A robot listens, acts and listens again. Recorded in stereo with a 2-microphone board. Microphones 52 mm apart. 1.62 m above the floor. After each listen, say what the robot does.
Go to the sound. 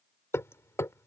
Turn 60° left.
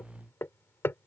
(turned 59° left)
Turn 55° left.
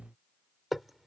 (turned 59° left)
Drive 1.0 m forward.
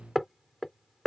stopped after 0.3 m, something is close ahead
Something is in my way. I am facing the hammering but have not reached it.